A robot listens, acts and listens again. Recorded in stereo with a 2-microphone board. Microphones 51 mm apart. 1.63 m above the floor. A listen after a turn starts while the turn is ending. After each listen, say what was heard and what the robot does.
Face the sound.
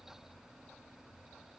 Keep listening.
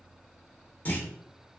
The clunk: about 30° left or 150° left. Turn 30° left.
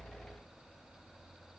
Keep listening.
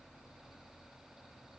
I heard a clunk, but can't make it out now. It was about straight ahead or 120° left.